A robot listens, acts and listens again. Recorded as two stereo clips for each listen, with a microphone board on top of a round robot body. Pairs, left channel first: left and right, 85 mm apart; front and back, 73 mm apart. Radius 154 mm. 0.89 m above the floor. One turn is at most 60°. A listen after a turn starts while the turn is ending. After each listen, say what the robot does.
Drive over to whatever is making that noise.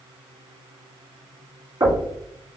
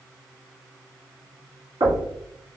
Turn 60° right.
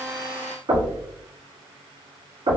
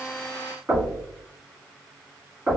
Turn 60° right.
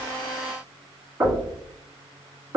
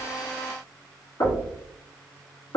Turn 20° right.
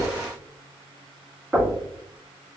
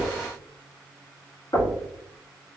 Drive 1.0 m forward.
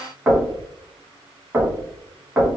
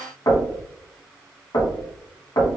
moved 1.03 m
Turn 10° right.
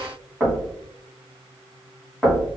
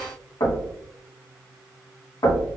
Drive 1.0 m forward.
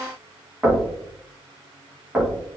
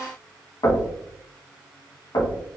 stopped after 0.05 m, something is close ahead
Turn 10° right.
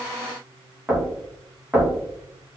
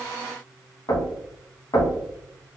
I am next to the knocking.